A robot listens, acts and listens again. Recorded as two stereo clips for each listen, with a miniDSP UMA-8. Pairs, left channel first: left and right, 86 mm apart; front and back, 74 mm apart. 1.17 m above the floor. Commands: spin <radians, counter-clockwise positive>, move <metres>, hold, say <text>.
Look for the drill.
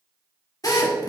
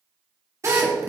spin 2.36
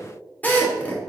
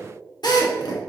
spin 0.35
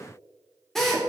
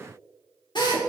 say Facing the drill.